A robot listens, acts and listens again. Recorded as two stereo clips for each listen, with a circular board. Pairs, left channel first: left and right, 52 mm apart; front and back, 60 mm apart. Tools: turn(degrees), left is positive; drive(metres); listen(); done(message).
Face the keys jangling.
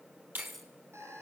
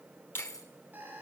done("Found it: keys jangling, straight ahead, 2 to 4 m away.")